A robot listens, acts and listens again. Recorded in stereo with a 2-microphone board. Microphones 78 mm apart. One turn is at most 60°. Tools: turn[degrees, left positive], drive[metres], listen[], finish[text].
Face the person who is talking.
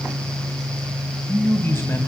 Thought: The man speaking: about 35° left or 145° left.
Action: turn[35]
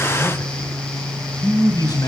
Thought: So it is at 105° left.
Action: turn[60]
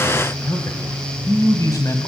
Thought: The man speaking is now 60° left.
Action: turn[60]
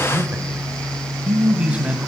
Thought: The man speaking is now 20° right.
Action: turn[-20]
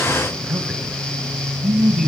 Action: finish[Facing the man speaking.]